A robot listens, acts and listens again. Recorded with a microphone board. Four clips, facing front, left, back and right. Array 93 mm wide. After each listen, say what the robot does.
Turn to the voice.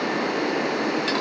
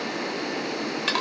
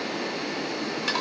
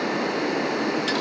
Keep listening.
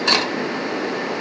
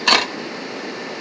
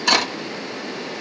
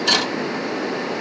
Keep listening.
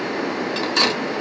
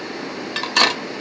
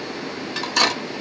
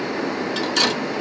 I can't make out anyone speaking, only cutlery clinking.